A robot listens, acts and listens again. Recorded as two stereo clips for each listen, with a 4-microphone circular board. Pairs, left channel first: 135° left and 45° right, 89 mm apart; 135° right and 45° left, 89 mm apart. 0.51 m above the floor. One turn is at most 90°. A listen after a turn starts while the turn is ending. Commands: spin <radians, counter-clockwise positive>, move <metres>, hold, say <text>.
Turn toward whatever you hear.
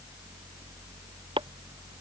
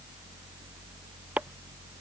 spin -0.52
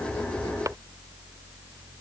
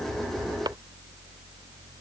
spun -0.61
hold
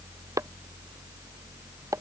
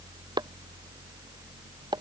say Facing the chopping.